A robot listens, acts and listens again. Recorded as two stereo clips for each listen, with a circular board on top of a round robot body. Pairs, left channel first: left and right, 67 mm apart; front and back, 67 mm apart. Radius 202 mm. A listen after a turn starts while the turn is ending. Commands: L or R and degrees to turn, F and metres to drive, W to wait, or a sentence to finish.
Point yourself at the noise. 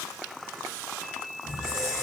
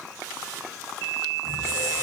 R160
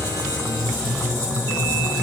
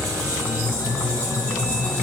R15
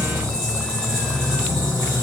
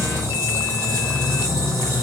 Facing the squeak, under 1 m away.